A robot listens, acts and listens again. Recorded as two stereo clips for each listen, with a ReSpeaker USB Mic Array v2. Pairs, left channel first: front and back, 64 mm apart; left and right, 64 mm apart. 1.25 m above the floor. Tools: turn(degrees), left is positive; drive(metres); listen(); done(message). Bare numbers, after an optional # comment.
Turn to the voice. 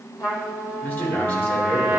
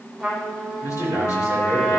# The man speaking: 60° left.
turn(60)
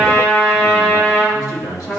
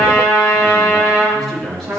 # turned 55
done("Found it: a man speaking, straight ahead, over 4 m away.")